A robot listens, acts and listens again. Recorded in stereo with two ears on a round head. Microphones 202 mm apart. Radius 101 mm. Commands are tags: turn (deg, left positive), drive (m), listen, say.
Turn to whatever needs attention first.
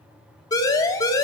<turn deg="15"/>
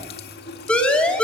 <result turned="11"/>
<say>Facing the siren, 2 to 4 m away.</say>